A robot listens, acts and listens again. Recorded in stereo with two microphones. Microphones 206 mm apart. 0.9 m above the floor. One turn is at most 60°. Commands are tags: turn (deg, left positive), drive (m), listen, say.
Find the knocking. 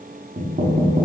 <turn deg="-45"/>
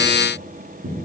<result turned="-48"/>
<turn deg="-60"/>
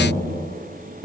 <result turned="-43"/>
<turn deg="-45"/>
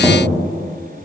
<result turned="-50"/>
<say>Found it: knocking, straight ahead, 1 to 2 m away.</say>